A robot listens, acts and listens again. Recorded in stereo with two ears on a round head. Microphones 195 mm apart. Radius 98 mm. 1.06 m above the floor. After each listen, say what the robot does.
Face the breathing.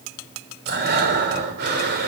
Turn 50° right.
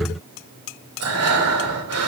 Turn 80° right.
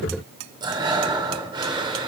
Turn 20° right.
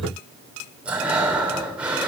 Facing the breathing, 2 to 4 m away.